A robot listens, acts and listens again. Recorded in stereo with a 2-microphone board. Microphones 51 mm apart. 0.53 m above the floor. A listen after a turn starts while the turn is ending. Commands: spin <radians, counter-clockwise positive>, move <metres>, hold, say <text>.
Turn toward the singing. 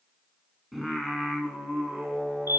spin -0.52
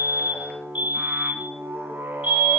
spin -2.36
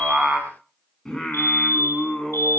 spin 0.26
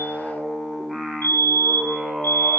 say Found it: singing, straight ahead, over 4 m away.